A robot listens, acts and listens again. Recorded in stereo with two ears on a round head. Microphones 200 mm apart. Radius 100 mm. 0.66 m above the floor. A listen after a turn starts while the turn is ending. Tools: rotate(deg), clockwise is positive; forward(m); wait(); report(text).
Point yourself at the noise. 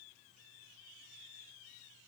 wait()
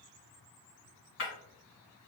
rotate(-60)
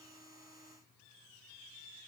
wait()
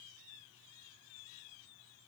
report("I heard breaking glass, but can't make it out now. It was about straight ahead or 60° left.")